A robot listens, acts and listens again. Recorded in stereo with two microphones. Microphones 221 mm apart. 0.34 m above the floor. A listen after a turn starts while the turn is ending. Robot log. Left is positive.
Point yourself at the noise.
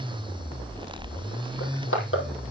cmd yaw +90
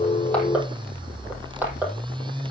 note: So it is at 10° right.
cmd yaw -10
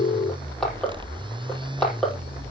end: Facing the crushing.